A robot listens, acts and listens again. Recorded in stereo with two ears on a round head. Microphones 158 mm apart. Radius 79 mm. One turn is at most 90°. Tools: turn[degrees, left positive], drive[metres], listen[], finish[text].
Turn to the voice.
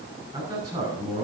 Thought: The man speaking: about 30° right or 150° right.
Action: turn[-30]
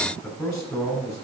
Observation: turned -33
Action: finish[Found it: a man speaking, straight ahead.]